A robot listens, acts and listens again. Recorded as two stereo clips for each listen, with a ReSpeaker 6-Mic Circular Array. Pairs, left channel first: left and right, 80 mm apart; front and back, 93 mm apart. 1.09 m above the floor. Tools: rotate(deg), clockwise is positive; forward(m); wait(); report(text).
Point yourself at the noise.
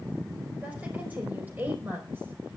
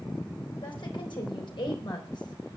rotate(25)
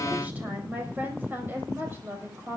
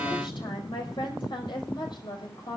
rotate(30)
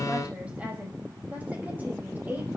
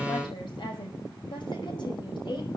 rotate(25)
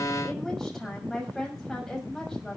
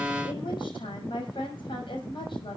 report("Facing the woman speaking.")